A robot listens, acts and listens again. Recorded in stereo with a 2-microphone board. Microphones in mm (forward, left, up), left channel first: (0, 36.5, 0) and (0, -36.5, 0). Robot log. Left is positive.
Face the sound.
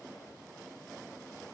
cmd idle
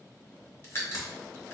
note: The crack: about 35° left or 145° left.
cmd yaw +35
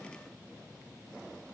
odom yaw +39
cmd idle
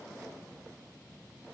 end: I heard a crack, but can't make it out now. It was about 5° right or 105° left.